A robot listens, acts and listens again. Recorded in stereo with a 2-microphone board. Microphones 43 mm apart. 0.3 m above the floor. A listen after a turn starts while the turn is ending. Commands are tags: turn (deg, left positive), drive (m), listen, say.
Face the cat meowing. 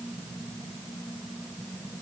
<listen/>
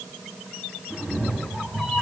<turn deg="-30"/>
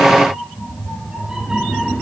<turn deg="-20"/>
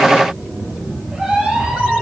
<turn deg="-145"/>
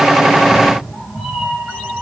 <turn deg="-10"/>
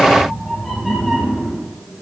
<say>Found it: a cat meowing, straight ahead, 2 to 4 m away.</say>